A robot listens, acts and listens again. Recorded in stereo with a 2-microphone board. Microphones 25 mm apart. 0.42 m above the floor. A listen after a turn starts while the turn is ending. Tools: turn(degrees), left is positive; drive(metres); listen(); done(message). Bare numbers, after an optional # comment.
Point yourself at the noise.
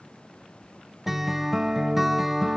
turn(-30)
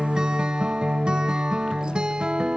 # So it is at 145° right.
turn(-145)
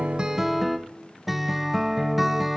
# The guitar is now 10° right.
turn(-10)
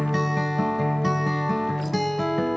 done("Facing the guitar.")